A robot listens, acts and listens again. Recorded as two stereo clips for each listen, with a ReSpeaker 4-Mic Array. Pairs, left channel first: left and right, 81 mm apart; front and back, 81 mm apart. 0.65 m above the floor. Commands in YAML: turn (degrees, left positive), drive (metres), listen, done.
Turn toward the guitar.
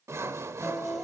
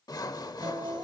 turn: 180
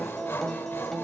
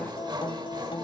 done: "Facing the guitar."